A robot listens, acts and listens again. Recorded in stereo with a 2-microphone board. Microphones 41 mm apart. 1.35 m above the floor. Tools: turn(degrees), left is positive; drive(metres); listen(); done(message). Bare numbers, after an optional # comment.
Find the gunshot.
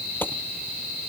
# The gunshot: about 55° left or 125° left.
turn(55)
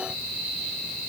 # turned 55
listen()
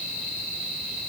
done("I heard a gunshot, but can't make it out now. It was about straight ahead or 70° left.")